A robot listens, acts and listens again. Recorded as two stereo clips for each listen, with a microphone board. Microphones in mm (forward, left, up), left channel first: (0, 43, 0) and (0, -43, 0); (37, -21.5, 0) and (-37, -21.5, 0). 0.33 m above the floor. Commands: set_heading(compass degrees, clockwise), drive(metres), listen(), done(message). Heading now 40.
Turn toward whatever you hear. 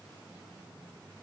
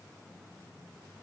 listen()
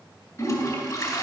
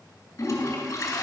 set_heading(0)
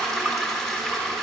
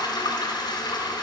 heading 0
done("Facing the toilet flushing, 2 to 4 m away.")